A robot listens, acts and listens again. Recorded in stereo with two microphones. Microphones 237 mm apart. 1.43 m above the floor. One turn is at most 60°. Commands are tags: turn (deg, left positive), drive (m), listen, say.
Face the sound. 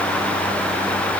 <listen/>
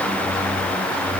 <listen/>
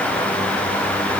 <say>I can't make out anything.</say>